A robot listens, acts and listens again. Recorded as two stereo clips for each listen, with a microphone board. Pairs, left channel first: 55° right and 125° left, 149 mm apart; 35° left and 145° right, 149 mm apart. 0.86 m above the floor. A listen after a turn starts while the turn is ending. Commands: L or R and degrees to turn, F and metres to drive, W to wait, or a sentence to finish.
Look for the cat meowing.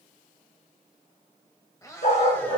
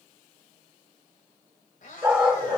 L15
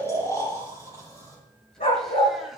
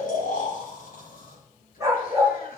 W
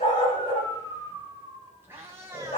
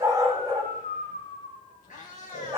L55
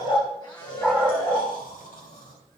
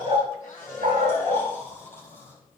Facing the cat meowing, 2 to 4 m away.